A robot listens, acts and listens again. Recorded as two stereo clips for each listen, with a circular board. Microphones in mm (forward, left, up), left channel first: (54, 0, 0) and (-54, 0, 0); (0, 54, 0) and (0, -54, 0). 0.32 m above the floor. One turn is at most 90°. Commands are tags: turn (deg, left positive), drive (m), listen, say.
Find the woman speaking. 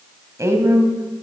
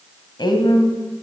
<turn deg="90"/>
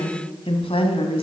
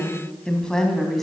<say>Found it: a woman speaking, straight ahead, 1 to 2 m away.</say>